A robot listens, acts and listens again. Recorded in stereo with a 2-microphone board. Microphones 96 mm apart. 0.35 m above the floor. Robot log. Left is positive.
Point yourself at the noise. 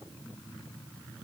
cmd idle
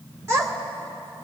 note: The child speaking: about 25° right or 155° right.
cmd yaw -25
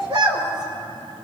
note: So it is at 130° right.
cmd yaw -130
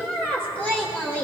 note: The child speaking is now 15° left.
cmd yaw +15
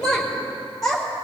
end: Found it: a child speaking, straight ahead.